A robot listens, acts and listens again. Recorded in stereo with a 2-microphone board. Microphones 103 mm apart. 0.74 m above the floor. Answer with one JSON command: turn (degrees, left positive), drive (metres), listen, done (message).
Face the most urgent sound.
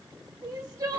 {"turn": -40}
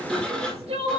{"turn": -100}
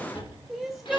{"done": "Found it: crying, straight ahead."}